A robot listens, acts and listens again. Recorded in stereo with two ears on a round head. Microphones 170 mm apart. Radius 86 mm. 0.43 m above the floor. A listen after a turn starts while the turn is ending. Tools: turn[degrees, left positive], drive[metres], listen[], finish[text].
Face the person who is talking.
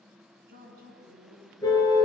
Thought: The woman speaking: about 55° right or 125° right.
Action: turn[-55]
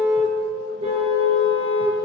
Action: listen[]
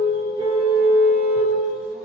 Action: listen[]
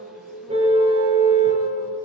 Action: finish[I heard a woman speaking, but can't make it out now. It was about straight ahead or 70° right.]